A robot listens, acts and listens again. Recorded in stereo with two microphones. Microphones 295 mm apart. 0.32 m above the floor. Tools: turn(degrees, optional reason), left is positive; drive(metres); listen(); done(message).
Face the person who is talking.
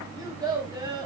turn(degrees=-30)
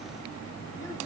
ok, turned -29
listen()
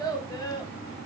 turn(degrees=15, reason="So it is at 15° left.")
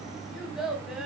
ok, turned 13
done("Facing the child speaking, 1 to 2 m away.")